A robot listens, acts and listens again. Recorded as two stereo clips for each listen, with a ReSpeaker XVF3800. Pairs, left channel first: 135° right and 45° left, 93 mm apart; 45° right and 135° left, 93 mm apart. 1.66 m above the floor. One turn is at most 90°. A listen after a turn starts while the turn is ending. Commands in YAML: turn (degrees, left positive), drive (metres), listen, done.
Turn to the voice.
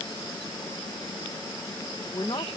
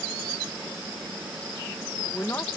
turn: -90
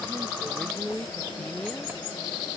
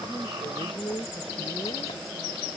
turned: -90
turn: -60
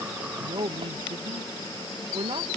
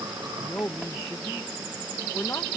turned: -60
turn: 10
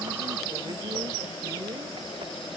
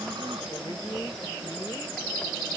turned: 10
listen: true
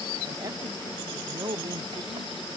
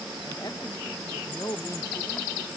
done: "Facing the man speaking."